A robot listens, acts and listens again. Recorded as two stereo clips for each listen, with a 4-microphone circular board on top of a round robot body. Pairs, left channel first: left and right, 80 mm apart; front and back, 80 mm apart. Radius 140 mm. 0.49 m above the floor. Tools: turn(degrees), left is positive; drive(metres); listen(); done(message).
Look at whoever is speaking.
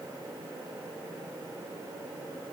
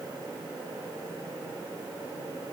listen()
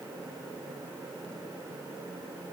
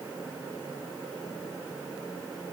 listen()
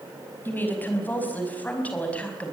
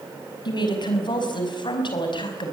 turn(degrees=15)
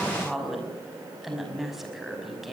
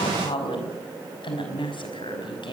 done("Facing the woman speaking, over 4 m away.")